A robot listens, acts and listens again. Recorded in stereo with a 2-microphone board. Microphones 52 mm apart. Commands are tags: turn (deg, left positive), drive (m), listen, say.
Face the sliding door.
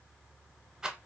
<listen/>
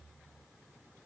<listen/>
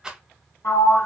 <turn deg="70"/>
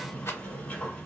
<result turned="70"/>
<turn deg="30"/>
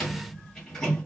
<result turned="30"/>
<turn deg="10"/>
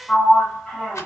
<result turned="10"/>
<say>Facing the sliding door.</say>